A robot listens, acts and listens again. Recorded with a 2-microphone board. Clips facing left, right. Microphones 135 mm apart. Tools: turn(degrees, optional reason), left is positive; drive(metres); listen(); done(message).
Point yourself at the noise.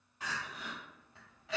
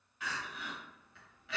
turn(degrees=35, reason="The crying: about 35° left or 145° left.")
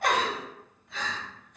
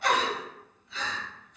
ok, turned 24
turn(degrees=115, reason="So it is at 115° left.")
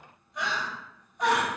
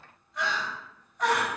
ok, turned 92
turn(degrees=20, reason="The crying is now 20° left.")
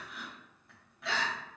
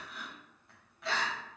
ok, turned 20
done("Found it: crying, straight ahead.")